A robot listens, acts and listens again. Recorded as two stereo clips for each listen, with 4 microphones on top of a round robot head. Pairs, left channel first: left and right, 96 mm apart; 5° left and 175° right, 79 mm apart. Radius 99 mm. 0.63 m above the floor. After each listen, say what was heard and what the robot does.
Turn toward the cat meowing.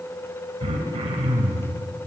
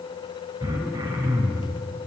Keep listening.
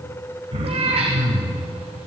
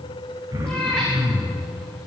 The cat meowing: 75° right. Turn 75° right.
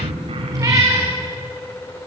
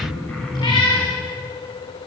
The cat meowing is now 35° right. Turn 35° right.
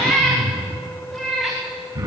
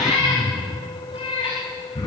Facing the cat meowing.